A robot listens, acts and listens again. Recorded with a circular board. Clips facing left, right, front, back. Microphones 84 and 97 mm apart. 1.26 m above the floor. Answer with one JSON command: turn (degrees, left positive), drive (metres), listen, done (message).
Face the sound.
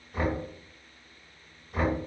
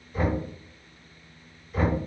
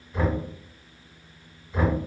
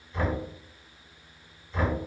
{"turn": 75}
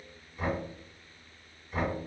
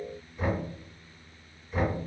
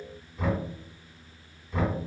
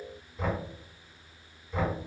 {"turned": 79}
{"done": "Found it: knocking, straight ahead."}